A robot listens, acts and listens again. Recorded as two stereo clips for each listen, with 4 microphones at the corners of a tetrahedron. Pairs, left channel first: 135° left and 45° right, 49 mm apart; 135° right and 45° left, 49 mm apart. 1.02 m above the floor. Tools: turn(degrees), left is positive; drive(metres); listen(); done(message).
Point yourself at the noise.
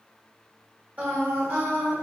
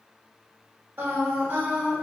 turn(degrees=-10)
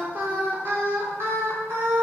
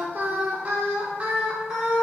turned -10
turn(degrees=-30)
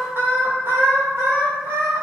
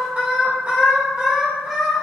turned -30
turn(degrees=-25)
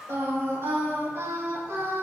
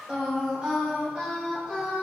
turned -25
turn(degrees=-20)
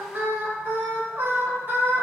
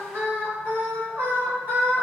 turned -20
done("Found it: singing, straight ahead.")